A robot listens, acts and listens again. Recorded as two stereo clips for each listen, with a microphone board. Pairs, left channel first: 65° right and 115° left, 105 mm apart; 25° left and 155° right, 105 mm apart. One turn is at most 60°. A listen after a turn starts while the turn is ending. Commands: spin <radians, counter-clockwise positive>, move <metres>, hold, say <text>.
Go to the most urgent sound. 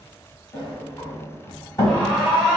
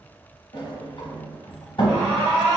spin -1.05
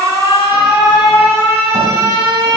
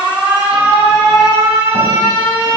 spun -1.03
spin -1.05
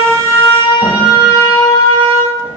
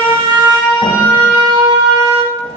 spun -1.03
spin -0.61
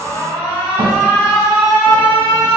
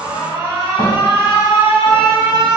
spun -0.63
move 1.0
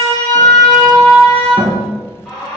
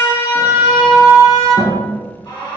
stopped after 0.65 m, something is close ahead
say I am next to the alarm.